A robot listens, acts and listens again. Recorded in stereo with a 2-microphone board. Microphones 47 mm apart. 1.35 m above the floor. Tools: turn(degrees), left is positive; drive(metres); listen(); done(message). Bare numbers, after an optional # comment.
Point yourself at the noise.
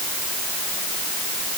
listen()
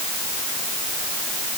listen()
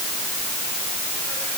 done("I can't make out anything to turn to.")